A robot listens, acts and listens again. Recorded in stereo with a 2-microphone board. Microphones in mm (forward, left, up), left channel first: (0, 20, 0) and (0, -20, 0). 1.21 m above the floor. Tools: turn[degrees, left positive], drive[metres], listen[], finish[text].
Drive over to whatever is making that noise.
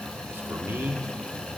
Thought: The man speaking: about 65° right or 115° right.
Action: turn[-65]
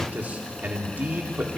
Thought: So it is at 45° right.
Action: turn[-45]
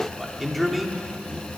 Action: drive[1.0]
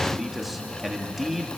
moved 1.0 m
Action: drive[1.0]
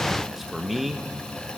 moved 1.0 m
Action: drive[1.0]
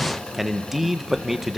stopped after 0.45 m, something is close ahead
Action: finish[Arrived at the man speaking, straight ahead.]